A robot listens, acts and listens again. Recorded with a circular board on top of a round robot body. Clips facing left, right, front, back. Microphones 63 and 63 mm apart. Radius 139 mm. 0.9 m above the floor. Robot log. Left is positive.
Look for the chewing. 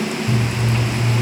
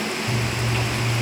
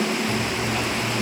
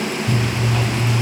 note: The chewing: 160° left.
cmd yaw +160
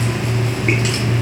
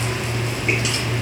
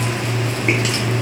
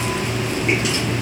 note: The chewing is now 40° left.
cmd yaw +40
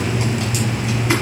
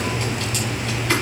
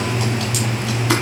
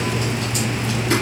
note: The chewing is now 15° left.
cmd yaw +15
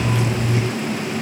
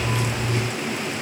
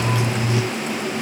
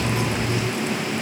end: Found it: chewing, straight ahead, 1 to 2 m away.